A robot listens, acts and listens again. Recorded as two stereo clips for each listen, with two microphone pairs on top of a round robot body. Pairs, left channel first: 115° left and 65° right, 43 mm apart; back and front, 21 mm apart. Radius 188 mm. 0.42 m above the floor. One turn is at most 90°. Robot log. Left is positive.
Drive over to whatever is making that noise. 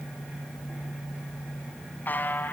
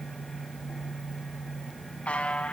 note: The buzzer: 160° left.
cmd yaw +90
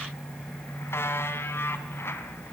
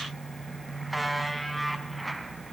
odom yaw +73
note: The buzzer is now 90° left.
cmd yaw +90
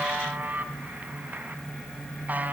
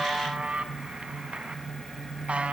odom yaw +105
note: The buzzer is now 15° right.
cmd yaw -15
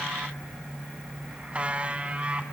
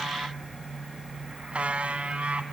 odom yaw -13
cmd fwd 1.0
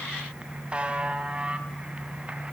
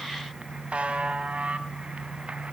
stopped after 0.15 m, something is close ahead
end: Something is in my way. I am facing the buzzer but have not reached it.